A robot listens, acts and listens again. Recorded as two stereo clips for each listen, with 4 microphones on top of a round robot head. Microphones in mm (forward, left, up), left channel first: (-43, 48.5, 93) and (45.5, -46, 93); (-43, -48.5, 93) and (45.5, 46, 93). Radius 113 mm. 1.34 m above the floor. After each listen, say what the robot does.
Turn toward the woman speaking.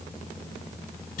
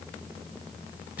Keep listening.
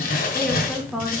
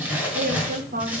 Turn 35° left.
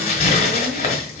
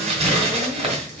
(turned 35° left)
Keep listening.
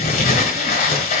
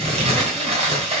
Keep listening.
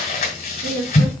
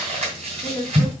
Turn 60° right.
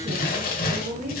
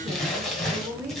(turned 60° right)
Turn 30° right.
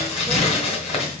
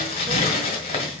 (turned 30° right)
Keep listening.
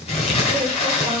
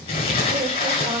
Keep listening.
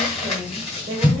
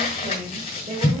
Turn 10° left.
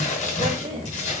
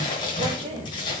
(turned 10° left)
Facing the woman speaking.